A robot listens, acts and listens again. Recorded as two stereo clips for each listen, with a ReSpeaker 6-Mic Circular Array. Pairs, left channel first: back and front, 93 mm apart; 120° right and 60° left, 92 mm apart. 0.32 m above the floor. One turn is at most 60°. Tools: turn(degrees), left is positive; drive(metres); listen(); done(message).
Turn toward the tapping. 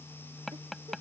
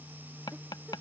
turn(degrees=-60)
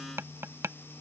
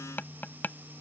turn(degrees=-55)
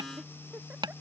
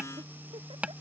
turn(degrees=-15)
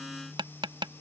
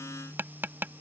done("Found it: tapping, straight ahead.")